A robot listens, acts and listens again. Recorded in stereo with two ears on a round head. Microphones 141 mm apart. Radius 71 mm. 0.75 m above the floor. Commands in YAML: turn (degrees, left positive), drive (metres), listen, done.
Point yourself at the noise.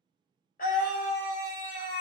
turn: 55
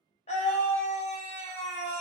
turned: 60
turn: 50
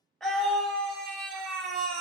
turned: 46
done: "Found it: a scream, straight ahead."